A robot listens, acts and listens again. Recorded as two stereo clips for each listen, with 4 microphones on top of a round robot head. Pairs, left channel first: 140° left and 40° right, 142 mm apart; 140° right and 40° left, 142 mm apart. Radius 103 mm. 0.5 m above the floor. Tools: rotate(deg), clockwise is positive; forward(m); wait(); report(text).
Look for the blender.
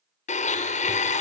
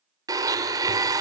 rotate(-105)
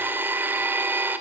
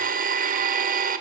rotate(-35)
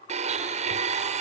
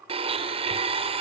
report("Facing the blender, 1 to 2 m away.")